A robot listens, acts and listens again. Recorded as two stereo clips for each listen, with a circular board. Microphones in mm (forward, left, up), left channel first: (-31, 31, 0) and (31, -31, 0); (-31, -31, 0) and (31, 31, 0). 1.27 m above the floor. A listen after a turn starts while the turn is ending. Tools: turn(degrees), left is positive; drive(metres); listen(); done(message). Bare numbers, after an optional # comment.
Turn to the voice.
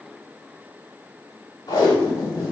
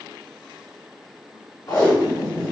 listen()
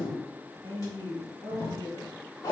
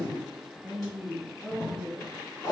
# The woman speaking: 40° right.
turn(-40)
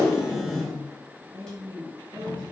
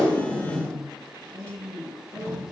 done("Facing the woman speaking.")